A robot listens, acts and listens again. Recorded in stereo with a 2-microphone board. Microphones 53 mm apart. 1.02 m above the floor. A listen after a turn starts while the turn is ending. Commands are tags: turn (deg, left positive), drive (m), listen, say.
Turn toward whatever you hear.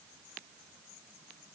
<listen/>
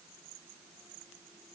<listen/>
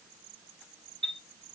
<turn deg="25"/>
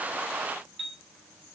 <say>Found it: a chime, straight ahead, 1 to 2 m away.</say>